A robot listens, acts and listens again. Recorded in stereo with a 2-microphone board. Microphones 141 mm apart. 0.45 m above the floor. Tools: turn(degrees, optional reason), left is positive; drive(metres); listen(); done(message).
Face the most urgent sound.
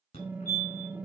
turn(degrees=55, reason="The fire alarm: about 55° left or 125° left.")
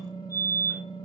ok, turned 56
turn(degrees=10, reason="So it is at 10° left.")
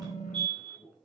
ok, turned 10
done("Facing the fire alarm.")